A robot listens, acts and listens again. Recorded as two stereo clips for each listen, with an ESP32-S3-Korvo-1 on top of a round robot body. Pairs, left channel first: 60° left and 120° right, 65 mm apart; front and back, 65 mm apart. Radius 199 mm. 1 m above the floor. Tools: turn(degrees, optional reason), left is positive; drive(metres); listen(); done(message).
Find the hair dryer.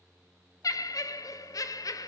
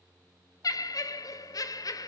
listen()
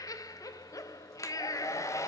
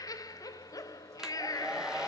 turn(degrees=100, reason="The hair dryer: 100° left.")
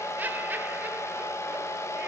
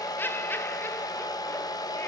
turn(degrees=15, reason="The hair dryer is now 15° left.")
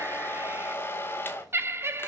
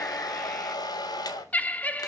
done("Found it: a hair dryer, straight ahead, 1 to 2 m away.")